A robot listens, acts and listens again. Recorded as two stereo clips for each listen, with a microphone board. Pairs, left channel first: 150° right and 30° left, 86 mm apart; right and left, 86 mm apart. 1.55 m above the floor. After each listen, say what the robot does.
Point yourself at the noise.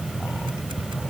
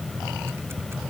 Keep listening.
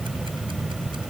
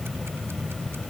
Keep listening.
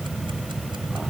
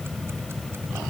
I can't make out anything.